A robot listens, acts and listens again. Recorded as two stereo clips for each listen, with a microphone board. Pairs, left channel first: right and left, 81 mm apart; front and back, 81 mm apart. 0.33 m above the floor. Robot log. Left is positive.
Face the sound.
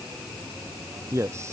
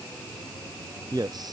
note: The man speaking: 145° left.
cmd yaw +145
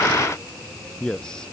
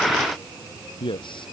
note: The man speaking is now 10° right.
cmd yaw -10
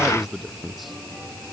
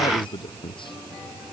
end: Found it: a man speaking, straight ahead.